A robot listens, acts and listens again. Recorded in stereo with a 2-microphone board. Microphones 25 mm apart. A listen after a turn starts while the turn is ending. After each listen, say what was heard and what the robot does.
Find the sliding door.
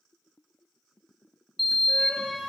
Turn 30° left.
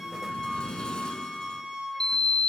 So it is at 140° left. Turn 140° left.
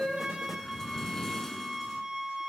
The sliding door is now 20° left. Turn 20° left.
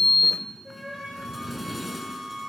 Facing the sliding door, under 1 m away.